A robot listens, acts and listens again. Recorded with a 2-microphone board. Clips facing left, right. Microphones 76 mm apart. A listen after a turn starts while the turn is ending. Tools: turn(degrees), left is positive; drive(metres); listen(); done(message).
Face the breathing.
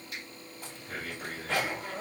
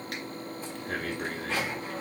turn(degrees=-65)
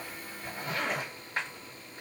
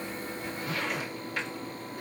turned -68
listen()
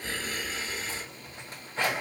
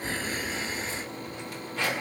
turn(degrees=-35)
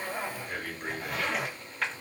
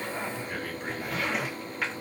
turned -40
done("Found it: breathing, straight ahead.")